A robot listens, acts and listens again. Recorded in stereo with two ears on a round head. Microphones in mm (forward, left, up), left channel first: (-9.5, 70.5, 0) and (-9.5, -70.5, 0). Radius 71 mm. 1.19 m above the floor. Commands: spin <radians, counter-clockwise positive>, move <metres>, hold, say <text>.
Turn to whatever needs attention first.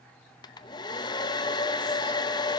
hold
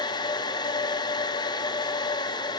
hold
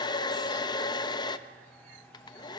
say I can't make out anything urgent, only a hair dryer.